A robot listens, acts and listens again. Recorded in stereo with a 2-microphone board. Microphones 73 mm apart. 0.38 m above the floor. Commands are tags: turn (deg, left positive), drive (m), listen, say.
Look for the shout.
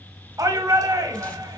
<turn deg="-50"/>
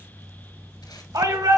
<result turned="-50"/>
<turn deg="-75"/>
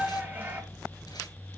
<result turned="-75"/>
<turn deg="-30"/>
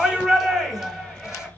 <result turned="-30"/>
<say>Facing the shout.</say>